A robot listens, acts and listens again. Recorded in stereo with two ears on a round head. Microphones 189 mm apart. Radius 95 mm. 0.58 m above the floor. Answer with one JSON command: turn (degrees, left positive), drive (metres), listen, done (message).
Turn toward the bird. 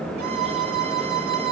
{"listen": true}
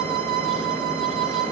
{"listen": true}
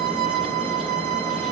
{"done": "I can't make out a bird to turn to."}